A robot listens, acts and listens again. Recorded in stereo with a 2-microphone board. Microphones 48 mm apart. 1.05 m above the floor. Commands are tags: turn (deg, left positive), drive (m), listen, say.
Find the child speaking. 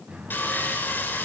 <listen/>
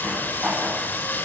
<listen/>
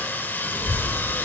<turn deg="90"/>
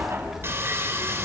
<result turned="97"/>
<turn deg="-10"/>
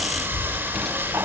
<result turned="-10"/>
<say>Facing the child speaking.</say>